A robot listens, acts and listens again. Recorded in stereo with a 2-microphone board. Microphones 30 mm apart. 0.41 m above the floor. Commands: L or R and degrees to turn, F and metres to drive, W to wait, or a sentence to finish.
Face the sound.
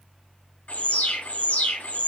L60
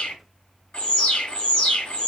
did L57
L50
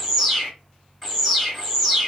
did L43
L10
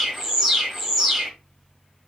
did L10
Facing the alarm, 1 to 2 m away.